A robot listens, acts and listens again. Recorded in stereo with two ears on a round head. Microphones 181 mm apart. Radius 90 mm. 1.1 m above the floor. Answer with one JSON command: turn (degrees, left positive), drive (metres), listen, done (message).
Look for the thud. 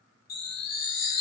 {"listen": true}
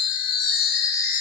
{"listen": true}
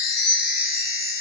{"done": "I can't make out a thud to turn to."}